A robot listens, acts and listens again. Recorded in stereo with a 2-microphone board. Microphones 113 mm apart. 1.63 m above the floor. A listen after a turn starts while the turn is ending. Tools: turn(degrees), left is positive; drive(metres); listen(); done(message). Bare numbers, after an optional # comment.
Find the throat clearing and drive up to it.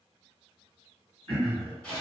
# The throat clearing: about 55° right or 125° right.
turn(-55)
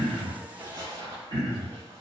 # So it is at 60° right.
turn(-60)
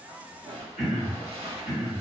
drive(1.0)
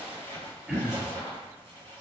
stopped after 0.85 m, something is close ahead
# The throat clearing is now 10° right.
turn(-10)
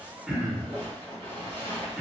done("Arrived at the throat clearing, straight ahead.")